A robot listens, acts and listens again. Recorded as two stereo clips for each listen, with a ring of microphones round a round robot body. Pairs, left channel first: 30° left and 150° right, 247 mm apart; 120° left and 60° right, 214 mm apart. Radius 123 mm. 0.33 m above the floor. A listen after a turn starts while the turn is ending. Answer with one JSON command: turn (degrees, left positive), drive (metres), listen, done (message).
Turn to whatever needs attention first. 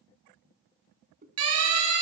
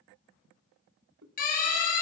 {"turn": 180}
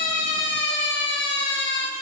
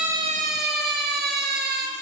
{"turn": -20}
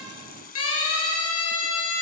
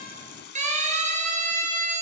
{"done": "Facing the siren, over 4 m away."}